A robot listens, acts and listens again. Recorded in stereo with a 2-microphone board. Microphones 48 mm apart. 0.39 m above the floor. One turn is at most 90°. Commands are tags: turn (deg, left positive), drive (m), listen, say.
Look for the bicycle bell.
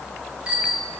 <turn deg="-25"/>
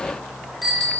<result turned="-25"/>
<say>Found it: a bicycle bell, straight ahead, over 4 m away.</say>